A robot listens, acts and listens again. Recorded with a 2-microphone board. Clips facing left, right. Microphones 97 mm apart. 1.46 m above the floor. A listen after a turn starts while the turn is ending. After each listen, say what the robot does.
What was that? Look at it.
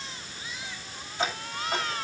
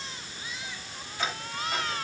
Turn 30° left.
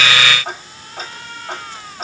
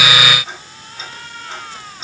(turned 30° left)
Turn 125° left.
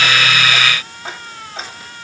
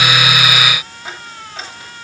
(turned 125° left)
Turn 35° left.
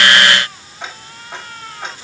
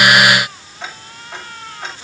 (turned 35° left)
Turn 20° left.
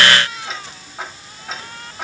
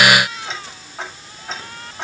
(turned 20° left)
Facing the ticking.